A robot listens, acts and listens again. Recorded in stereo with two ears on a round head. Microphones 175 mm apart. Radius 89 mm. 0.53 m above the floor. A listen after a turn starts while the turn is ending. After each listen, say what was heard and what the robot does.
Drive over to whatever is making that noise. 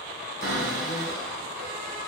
The cupboard door: about 55° right or 125° right. Turn 55° right.
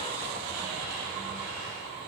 Keep listening.
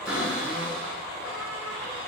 Drive 1.0 m forward.
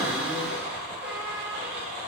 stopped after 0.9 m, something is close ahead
The cupboard door is now 10° right. Turn 10° right.
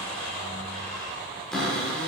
Arrived at the cupboard door, straight ahead.